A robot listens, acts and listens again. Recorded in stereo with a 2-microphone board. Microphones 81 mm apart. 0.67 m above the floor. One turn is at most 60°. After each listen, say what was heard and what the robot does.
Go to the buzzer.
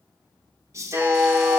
The buzzer: about 30° right or 150° right. Turn 30° right.
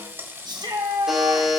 Drive 1.0 m forward.
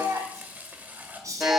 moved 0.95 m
Drive 1.0 m forward.
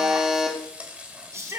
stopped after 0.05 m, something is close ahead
The buzzer is now 10° right. Turn 10° right.
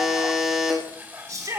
I am next to the buzzer.